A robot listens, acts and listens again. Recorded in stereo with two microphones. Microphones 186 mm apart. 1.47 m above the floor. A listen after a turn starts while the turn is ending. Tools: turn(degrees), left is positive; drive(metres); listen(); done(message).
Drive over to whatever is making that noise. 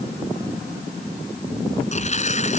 turn(degrees=40)
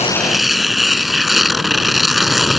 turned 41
drive(metres=1.0)
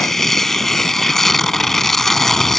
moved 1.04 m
drive(metres=1.0)
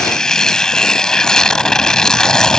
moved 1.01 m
drive(metres=1.0)
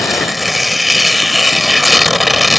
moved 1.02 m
drive(metres=1.0)
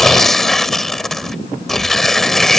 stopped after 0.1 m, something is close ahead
done("Arrived at the tearing paper, straight ahead.")